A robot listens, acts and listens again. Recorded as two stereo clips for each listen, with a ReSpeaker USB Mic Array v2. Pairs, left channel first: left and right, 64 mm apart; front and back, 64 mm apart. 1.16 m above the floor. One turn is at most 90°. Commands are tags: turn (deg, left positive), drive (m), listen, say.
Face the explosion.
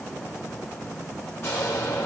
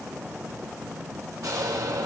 <turn deg="90"/>
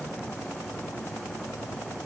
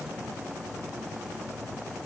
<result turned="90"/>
<turn deg="55"/>
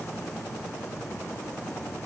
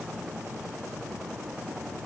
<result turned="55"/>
<say>I heard an explosion from this way, but can't make it out now.</say>